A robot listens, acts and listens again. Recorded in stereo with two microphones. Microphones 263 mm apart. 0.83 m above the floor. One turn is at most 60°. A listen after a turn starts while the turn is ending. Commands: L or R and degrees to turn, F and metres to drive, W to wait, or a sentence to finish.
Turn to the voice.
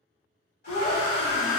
L60
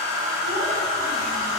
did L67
W
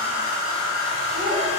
L35
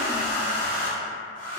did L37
W
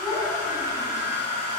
Found it: a child speaking, straight ahead, under 1 m away.